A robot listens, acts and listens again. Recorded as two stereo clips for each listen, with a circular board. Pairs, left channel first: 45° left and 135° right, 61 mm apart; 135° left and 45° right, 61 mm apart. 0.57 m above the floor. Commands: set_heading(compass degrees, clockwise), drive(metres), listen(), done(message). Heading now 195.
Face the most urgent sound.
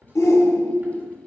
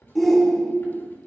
set_heading(145)
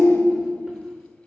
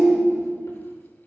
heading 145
set_heading(120)
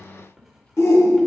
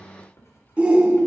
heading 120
set_heading(100)
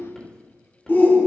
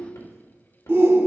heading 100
done("Facing the shout, 1 to 2 m away.")